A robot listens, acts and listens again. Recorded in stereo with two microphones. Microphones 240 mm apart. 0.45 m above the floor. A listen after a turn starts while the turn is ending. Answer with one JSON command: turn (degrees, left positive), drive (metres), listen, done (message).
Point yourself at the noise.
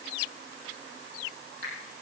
{"turn": -40}
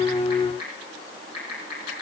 {"turn": -100}
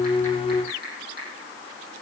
{"turn": -40}
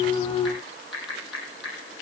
{"done": "Facing the typing on a keyboard."}